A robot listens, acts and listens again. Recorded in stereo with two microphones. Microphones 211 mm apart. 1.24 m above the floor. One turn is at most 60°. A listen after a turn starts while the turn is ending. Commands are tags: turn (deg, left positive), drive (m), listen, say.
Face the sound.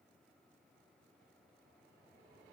<listen/>
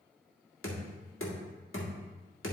<turn deg="60"/>
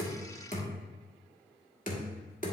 <turn deg="40"/>
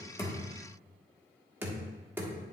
<turn deg="-10"/>
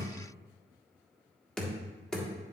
<say>Found it: knocking, straight ahead, 1 to 2 m away.</say>